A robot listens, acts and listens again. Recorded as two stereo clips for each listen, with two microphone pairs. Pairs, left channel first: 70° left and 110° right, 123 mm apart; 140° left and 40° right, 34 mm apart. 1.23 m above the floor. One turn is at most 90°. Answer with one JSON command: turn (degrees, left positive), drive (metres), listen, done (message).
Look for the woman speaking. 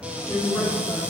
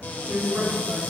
{"done": "Found it: a woman speaking, straight ahead."}